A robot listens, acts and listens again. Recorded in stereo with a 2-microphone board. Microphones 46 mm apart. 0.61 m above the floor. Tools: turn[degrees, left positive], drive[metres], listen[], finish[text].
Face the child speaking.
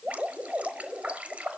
Action: listen[]
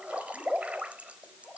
Action: listen[]
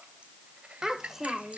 Action: turn[-30]
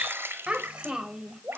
Thought: So it is at 160° right.
Action: turn[-160]
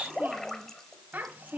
Thought: The child speaking is now 40° right.
Action: turn[-40]
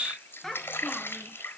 Thought: The child speaking is now 10° left.
Action: turn[10]
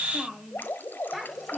Action: finish[Found it: a child speaking, straight ahead.]